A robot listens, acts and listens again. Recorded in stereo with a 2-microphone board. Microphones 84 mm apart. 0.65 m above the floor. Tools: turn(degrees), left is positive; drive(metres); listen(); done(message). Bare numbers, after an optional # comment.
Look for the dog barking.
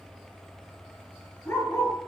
# The dog barking: about 30° left or 150° left.
turn(30)
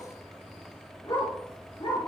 # So it is at 105° left.
turn(105)
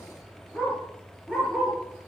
done("Found it: a dog barking, straight ahead.")